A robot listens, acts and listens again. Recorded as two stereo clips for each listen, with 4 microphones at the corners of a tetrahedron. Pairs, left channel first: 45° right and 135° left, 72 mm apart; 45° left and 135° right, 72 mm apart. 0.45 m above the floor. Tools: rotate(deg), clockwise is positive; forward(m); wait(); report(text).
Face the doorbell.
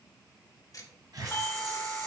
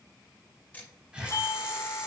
rotate(-10)
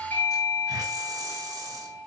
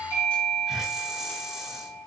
report("Facing the doorbell, 2 to 4 m away.")